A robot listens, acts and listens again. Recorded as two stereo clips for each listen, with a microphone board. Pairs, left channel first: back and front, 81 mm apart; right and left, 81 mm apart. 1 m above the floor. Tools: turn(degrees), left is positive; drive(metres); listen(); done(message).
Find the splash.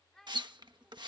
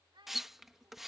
done("Found it: a splash, straight ahead.")